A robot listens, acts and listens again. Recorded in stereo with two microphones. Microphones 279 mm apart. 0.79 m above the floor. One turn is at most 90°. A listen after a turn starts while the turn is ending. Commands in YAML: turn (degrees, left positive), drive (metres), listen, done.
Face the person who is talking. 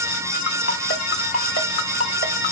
listen: true
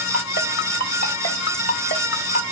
listen: true
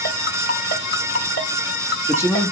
turn: 30
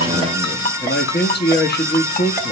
turn: 90
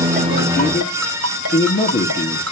turn: 45
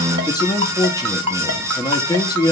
turn: 15
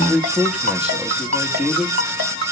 done: "Found it: a man speaking, straight ahead."